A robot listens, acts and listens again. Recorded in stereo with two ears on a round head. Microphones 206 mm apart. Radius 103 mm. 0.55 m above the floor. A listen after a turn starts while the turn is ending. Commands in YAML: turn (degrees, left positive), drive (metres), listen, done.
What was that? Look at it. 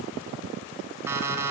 turn: -30
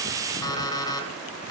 turn: 15
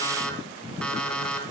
done: "Found it: an alarm clock, straight ahead, 2 to 4 m away."